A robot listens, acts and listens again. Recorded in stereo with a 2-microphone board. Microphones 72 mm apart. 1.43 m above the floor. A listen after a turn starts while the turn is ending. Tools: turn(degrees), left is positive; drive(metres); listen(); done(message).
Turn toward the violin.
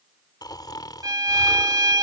turn(degrees=-65)
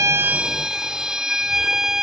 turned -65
turn(degrees=-10)
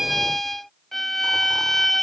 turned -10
done("Found it: a violin, straight ahead.")